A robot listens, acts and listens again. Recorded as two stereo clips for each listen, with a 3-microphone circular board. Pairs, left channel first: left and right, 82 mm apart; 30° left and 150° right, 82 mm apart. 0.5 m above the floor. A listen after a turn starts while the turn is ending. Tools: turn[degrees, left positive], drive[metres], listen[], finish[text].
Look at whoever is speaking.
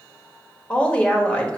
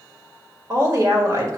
Thought: The woman speaking: 165° left.
Action: turn[165]
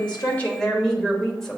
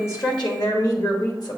Action: finish[Facing the woman speaking.]